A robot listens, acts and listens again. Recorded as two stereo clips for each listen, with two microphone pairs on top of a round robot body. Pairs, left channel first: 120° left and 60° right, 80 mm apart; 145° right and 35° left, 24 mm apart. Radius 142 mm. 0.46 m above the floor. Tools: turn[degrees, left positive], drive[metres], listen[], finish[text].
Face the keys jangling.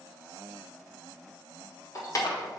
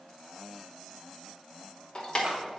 Thought: The keys jangling: 165° left.
Action: turn[165]
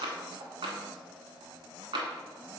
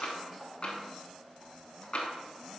Action: listen[]
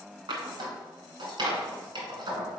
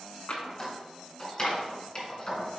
Thought: The keys jangling is now 80° right.
Action: turn[-80]
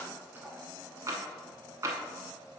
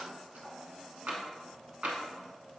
Action: listen[]
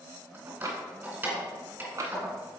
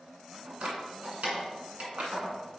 Thought: The keys jangling is now 10° left.
Action: turn[10]
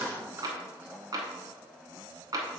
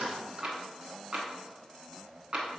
Action: finish[Facing the keys jangling, 2 to 4 m away.]